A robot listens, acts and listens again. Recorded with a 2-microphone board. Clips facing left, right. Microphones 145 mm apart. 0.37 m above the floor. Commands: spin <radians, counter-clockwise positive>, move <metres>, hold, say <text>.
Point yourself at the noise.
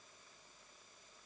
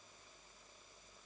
hold
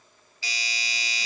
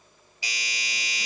spin -0.26
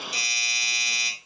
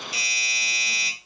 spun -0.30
say Found it: a doorbell, straight ahead, 2 to 4 m away.